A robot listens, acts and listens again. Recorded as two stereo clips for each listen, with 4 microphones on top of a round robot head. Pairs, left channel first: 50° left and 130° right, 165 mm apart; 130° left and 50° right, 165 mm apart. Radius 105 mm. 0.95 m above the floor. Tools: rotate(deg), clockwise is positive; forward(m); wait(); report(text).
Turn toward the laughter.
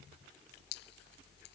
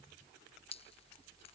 wait()
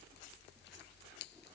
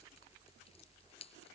wait()
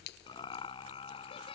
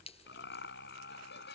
rotate(-110)
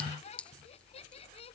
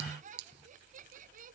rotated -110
report("Found it: laughter, straight ahead.")